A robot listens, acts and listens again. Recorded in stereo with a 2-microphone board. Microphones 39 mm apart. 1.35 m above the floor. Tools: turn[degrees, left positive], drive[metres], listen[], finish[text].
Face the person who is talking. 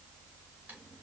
Action: listen[]
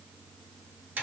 Action: listen[]
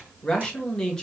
Thought: The man speaking: about 20° left or 160° left.
Action: turn[20]
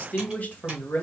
Thought: So it is at 140° left.
Action: turn[140]
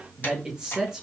Thought: The man speaking is now 20° right.
Action: turn[-20]
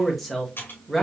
Action: finish[Facing the man speaking, 1 to 2 m away.]